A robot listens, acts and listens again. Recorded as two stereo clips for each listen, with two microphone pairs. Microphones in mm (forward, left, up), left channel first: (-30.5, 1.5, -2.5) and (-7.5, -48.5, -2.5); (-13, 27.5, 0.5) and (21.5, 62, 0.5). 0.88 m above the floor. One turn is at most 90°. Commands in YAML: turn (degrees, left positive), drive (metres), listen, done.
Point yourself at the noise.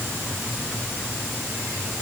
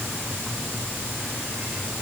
listen: true
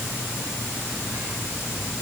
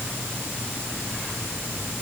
listen: true
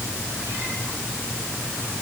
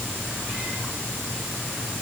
done: "I can't make out anything to turn to."